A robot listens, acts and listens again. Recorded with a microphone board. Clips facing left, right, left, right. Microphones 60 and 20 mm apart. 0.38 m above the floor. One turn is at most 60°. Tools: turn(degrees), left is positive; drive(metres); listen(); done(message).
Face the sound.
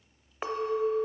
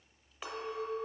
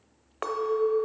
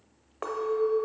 turn(degrees=40)
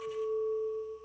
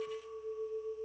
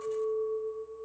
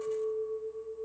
turn(degrees=60)
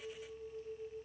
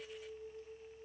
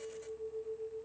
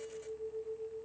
turn(degrees=40)
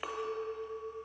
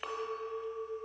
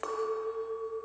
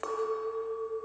done("Found it: a clink, straight ahead, under 1 m away.")